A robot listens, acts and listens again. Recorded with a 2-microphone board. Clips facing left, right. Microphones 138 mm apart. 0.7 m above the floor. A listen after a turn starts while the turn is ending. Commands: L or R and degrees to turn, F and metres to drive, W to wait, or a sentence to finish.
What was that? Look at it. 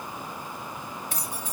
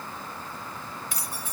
L40
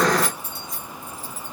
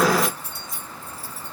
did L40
R10
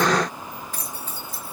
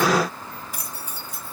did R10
R20
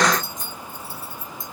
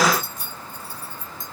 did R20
R20
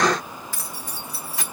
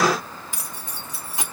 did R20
R25
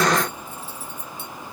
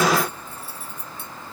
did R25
R10
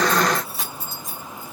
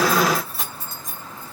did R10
Facing the keys jangling.